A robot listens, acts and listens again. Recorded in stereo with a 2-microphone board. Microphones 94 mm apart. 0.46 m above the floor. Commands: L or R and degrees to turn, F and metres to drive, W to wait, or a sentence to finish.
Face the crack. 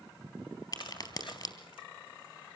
L45
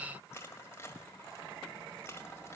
W
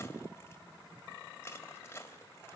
I heard a crack, but can't make it out now. It was about straight ahead or 90° left.